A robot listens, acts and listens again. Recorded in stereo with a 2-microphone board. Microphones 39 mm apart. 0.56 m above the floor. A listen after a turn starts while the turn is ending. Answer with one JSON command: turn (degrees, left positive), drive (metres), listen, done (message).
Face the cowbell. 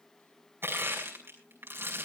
{"listen": true}
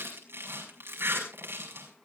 {"listen": true}
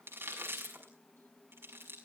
{"done": "I can't make out a cowbell, only crushing."}